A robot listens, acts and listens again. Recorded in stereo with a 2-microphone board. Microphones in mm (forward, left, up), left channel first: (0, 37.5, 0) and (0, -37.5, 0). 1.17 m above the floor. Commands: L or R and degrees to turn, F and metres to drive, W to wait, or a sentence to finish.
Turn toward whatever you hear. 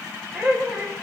R20
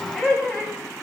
Found it: laughter, straight ahead, over 4 m away.